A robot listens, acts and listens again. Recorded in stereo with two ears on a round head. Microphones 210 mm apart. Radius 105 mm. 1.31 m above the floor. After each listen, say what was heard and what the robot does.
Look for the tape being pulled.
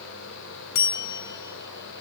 Keep listening.
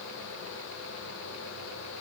Keep listening.
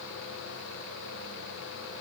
I can't make out tape being pulled, only a bell.